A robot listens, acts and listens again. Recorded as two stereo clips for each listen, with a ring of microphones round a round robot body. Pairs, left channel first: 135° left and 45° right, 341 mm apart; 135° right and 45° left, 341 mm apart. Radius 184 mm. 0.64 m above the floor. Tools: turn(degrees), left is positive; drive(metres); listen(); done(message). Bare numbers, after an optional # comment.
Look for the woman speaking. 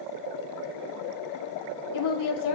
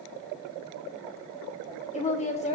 # The woman speaking: 155° left.
turn(155)
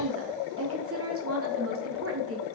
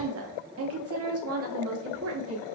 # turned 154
done("Found it: a woman speaking, straight ahead, 1 to 2 m away.")